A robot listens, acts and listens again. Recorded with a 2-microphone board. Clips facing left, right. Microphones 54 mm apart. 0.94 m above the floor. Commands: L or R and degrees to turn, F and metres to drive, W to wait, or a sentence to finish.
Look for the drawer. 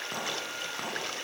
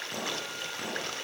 W
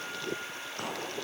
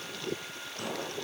W
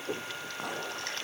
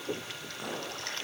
I can't make out a drawer to turn to.